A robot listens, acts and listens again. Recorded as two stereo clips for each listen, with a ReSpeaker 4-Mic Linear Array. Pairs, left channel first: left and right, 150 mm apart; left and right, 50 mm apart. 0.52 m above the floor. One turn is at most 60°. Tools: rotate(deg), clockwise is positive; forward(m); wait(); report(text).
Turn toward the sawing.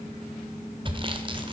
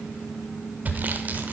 rotate(35)
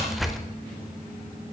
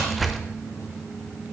report("Facing the sawing, under 1 m away.")